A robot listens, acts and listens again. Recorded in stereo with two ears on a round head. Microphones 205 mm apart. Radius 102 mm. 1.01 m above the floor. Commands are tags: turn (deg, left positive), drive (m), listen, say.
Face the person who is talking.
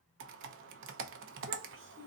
<turn deg="-55"/>
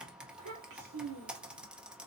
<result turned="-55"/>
<turn deg="-85"/>
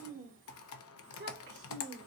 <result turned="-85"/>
<turn deg="-50"/>
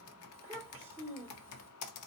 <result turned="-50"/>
<turn deg="-10"/>
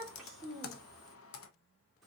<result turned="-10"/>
<say>Found it: a child speaking, straight ahead.</say>